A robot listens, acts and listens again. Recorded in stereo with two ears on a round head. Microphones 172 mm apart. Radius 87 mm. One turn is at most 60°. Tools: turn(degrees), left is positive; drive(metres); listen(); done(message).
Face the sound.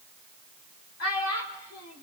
turn(degrees=60)
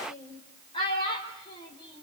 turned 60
turn(degrees=25)
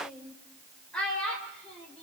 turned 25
done("Facing the child speaking.")